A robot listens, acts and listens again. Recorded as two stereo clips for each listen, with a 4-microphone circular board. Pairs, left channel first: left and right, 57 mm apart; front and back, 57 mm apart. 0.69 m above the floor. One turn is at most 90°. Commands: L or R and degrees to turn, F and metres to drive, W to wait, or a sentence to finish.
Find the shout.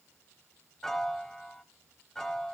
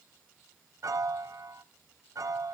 W
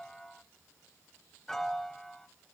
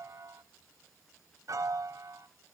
W
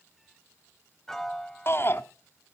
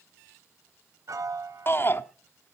L50
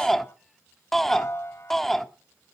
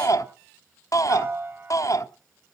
Found it: a shout, straight ahead.